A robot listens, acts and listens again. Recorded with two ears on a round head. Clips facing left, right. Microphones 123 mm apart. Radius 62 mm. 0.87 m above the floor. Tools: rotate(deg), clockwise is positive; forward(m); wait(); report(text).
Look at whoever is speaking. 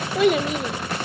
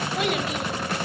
rotate(-90)
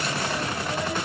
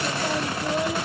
wait()
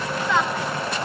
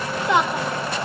rotate(15)
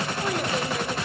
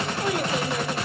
wait()
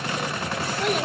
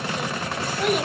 report("Found it: a child speaking, straight ahead, 1 to 2 m away.")